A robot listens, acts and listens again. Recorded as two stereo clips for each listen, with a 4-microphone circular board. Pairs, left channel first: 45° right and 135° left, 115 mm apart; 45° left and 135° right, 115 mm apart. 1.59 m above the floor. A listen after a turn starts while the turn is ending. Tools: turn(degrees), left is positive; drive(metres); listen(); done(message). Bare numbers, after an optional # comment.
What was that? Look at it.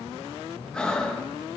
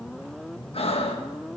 # The breathing: 35° left.
turn(35)
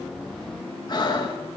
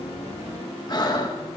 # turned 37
done("Facing the breathing.")